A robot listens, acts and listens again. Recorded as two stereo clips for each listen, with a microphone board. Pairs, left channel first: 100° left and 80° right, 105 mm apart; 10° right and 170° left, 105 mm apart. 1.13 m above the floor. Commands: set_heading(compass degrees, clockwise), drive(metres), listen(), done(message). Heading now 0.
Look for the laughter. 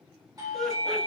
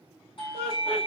set_heading(345)
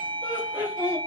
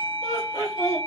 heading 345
done("Facing the laughter, 2 to 4 m away.")